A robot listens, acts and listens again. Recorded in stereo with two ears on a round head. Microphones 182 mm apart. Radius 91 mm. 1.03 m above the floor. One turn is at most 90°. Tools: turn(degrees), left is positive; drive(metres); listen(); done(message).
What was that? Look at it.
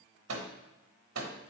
turn(degrees=-75)
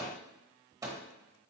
turn(degrees=-15)
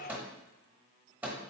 turn(degrees=-10)
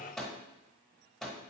done("Facing the microwave, 1 to 2 m away.")